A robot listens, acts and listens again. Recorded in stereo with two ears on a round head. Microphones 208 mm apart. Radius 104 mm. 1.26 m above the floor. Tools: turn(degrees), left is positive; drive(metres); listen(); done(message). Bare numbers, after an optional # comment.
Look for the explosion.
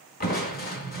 # The explosion: about 40° right or 140° right.
turn(-40)
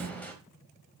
listen()
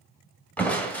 done("I heard an explosion, but can't make it out now. It was about straight ahead or 100° right.")